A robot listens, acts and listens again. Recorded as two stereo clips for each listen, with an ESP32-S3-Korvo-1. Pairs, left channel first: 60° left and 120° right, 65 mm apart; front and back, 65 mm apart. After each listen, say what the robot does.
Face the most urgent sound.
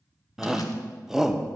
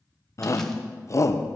Turn 35° right.
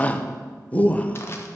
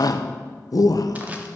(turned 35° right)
Found it: a shout, straight ahead.